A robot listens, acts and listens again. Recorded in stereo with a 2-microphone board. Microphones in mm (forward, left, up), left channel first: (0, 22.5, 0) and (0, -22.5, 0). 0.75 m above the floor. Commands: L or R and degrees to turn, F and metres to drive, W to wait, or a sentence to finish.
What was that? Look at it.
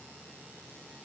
W
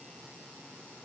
W
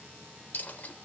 L40
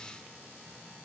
W
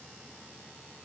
I heard a dropped coin, but can't make it out now. It was about straight ahead or 100° left.